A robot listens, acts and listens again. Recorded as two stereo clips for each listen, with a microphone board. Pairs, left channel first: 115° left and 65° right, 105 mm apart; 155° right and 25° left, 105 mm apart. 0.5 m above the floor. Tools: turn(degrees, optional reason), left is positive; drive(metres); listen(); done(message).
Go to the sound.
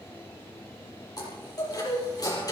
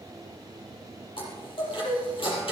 turn(degrees=165, reason="The chime: 165° left.")
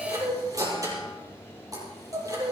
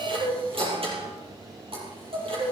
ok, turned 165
turn(degrees=-10, reason="The chime is now 10° right.")
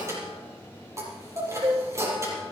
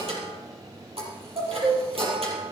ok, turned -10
drive(metres=1.0)
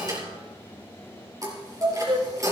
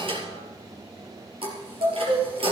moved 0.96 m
turn(degrees=-10, reason="The chime is now 10° right.")
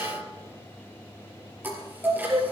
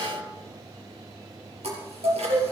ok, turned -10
drive(metres=1.0)
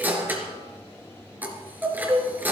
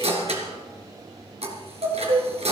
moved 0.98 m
drive(metres=1.0)
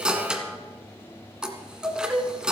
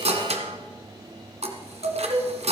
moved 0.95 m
turn(degrees=15, reason="The chime is now 15° left.")
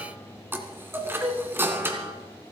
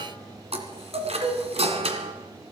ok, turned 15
drive(metres=1.0)
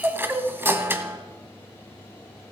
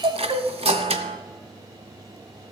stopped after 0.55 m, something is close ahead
done("Arrived at the chime, straight ahead.")